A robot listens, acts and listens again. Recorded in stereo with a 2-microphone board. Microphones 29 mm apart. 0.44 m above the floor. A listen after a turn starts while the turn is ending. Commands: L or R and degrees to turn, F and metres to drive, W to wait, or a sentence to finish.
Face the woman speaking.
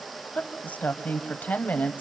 L65
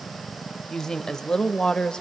L30
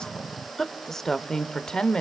L30
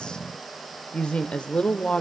L40
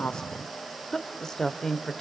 L15
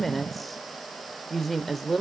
Found it: a woman speaking, straight ahead, 1 to 2 m away.